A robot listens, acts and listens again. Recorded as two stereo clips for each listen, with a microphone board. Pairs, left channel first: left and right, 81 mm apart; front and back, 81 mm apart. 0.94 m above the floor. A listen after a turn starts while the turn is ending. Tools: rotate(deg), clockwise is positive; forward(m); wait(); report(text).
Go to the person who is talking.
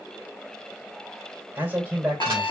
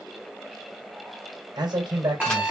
rotate(155)
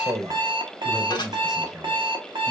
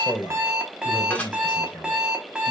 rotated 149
forward(1.0)
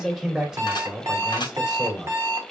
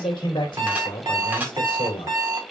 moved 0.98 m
rotate(10)
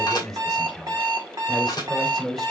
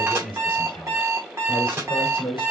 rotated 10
forward(1.0)
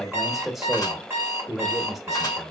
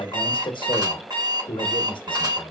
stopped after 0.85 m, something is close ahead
report("I am next to the man speaking.")